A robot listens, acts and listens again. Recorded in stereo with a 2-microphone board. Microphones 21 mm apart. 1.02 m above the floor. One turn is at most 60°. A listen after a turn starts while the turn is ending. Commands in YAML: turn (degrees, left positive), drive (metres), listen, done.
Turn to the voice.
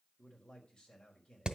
turn: 45
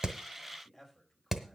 done: "Found it: a man speaking, straight ahead, over 4 m away."